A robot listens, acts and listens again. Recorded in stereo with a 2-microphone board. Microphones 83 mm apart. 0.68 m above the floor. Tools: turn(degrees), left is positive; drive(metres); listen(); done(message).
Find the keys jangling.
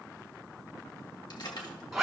turn(degrees=65)
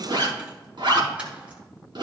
listen()
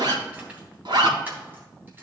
listen()
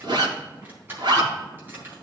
turn(degrees=-25)
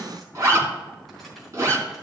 listen()
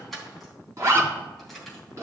done("Found it: keys jangling, straight ahead, 2 to 4 m away.")